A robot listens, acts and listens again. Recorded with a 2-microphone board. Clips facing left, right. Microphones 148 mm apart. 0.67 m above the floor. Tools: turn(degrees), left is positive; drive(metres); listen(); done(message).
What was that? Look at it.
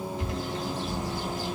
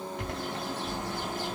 turn(degrees=-65)
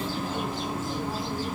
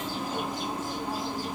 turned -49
turn(degrees=-15)
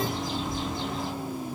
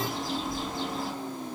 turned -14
done("Found it: a bird, straight ahead.")